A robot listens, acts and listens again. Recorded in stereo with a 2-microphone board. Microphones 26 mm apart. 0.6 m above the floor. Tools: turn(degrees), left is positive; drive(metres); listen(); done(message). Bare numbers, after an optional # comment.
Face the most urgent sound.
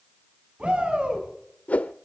# The shout: about 45° right or 135° right.
turn(-45)
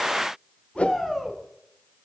done("Facing the shout.")